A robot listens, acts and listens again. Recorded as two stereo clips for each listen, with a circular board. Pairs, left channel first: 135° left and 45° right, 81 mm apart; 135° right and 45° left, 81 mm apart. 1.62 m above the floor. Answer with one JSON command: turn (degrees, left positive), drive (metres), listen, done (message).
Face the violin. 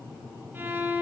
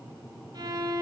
{"turn": 15}
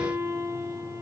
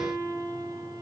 {"done": "Found it: a violin, straight ahead, under 1 m away."}